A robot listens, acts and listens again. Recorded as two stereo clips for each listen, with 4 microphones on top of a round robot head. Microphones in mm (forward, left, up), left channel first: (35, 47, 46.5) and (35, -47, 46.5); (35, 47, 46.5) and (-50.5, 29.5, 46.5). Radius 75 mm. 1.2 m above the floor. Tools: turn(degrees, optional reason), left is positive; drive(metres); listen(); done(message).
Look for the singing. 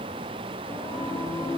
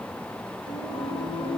turn(degrees=30, reason="The singing: 30° left.")
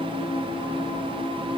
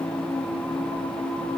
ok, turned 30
turn(degrees=-10, reason="The singing is now 10° right.")
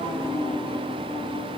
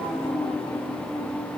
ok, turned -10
done("Facing the singing, over 4 m away.")